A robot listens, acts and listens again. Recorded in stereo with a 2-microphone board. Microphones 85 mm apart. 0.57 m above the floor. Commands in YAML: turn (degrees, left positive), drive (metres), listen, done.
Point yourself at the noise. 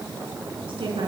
turn: -90
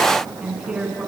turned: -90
turn: -10
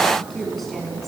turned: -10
done: "Facing the woman speaking."